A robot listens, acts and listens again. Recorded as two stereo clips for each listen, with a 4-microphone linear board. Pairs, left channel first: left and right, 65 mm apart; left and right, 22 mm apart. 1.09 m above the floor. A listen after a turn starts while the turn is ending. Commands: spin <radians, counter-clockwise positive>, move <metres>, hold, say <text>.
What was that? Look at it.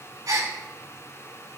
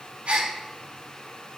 spin -1.22
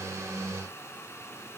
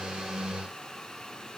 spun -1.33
hold
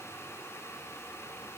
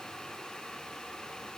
say I heard a gasp, but can't make it out now. It was about 5° left or 35° right.